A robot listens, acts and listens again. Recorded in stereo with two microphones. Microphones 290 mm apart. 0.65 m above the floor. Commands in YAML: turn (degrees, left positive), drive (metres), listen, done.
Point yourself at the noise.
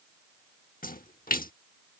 turn: 30
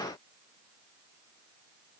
listen: true
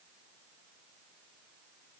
done: "I heard a splash, but can't make it out now. It was about straight ahead or 120° left."